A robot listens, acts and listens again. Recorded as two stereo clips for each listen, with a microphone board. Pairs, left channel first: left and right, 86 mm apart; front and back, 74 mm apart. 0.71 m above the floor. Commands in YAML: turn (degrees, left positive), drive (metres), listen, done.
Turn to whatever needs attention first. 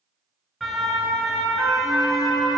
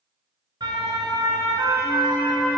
turn: 180
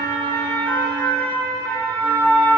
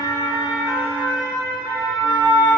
turn: 25
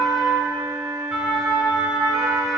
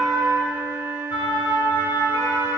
done: "Facing the siren, over 4 m away."